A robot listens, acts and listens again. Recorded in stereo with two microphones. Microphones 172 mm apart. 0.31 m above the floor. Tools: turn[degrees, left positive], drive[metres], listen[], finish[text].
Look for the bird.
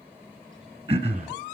Action: listen[]
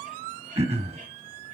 Action: listen[]
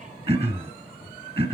Action: finish[I can't make out a bird to turn to.]